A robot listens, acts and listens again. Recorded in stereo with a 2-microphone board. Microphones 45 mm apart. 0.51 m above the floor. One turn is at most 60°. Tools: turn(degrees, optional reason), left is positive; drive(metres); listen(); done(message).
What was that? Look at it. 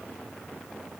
listen()
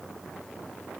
listen()
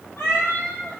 turn(degrees=60)
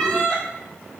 turn(degrees=30, reason="So it is at 30° left.")
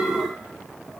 listen()
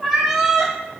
done("Found it: a cat meowing, straight ahead.")